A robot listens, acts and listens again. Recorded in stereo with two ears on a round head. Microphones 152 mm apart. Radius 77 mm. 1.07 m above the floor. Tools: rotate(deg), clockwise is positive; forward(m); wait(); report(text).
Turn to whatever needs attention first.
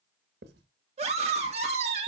rotate(40)
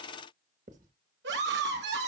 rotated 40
rotate(100)
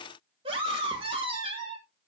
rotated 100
rotate(35)
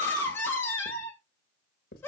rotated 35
rotate(-15)
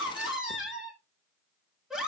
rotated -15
report("Found it: a scream, straight ahead.")